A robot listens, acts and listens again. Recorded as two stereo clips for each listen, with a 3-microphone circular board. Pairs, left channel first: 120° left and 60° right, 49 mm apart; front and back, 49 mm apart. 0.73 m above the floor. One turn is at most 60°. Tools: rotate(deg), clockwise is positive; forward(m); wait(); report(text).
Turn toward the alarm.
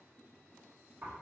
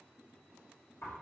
wait()
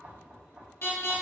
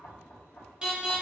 rotate(-60)
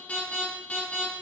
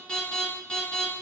rotate(-60)
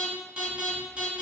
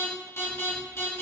report("Found it: an alarm, straight ahead.")